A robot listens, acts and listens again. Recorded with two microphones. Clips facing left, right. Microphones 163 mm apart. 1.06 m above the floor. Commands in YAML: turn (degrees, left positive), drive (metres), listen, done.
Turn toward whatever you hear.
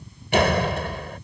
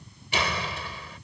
turn: 65
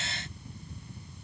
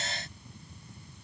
listen: true
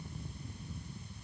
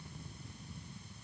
done: "I heard a door slam, but can't make it out now. It was about straight ahead or 50° left."